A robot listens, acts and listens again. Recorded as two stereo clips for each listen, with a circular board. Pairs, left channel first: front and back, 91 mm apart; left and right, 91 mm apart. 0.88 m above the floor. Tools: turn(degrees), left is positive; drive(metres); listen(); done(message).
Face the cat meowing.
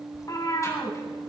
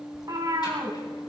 turn(degrees=-45)
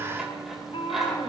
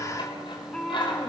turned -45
turn(degrees=10)
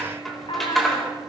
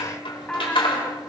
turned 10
turn(degrees=10)
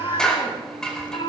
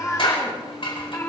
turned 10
turn(degrees=25)
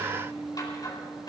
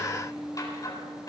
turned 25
listen()
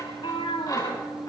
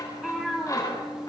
done("Facing the cat meowing, 2 to 4 m away.")